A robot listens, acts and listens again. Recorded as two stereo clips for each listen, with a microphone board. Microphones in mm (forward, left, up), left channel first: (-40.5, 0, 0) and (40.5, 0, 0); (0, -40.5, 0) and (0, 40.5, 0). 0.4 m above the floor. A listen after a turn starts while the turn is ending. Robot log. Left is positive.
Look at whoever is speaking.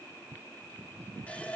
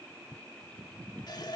cmd idle
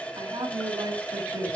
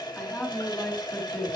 note: The woman speaking: 10° right.
cmd yaw -10
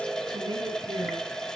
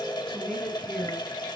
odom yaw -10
end: Facing the woman speaking, over 4 m away.